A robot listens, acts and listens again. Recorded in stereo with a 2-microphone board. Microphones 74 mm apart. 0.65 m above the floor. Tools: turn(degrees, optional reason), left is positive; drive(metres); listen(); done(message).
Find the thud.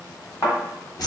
turn(degrees=50, reason="The thud: about 50° left or 130° left.")
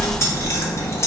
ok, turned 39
listen()
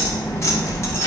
done("I heard a thud, but can't make it out now. It was about 10° left or 95° left.")